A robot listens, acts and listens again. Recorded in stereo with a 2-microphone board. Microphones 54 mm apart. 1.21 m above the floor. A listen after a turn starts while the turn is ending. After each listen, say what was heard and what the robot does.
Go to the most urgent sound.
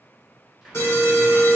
The alarm: about 55° left or 125° left. Turn 55° left.
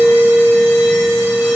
So it is at 70° left. Turn 70° left.
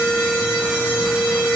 The alarm is now 15° right. Turn 15° right.
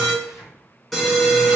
Drive 1.0 m forward.
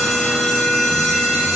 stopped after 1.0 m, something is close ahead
The alarm is now 10° left. Turn 10° left.
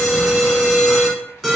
I am next to the alarm.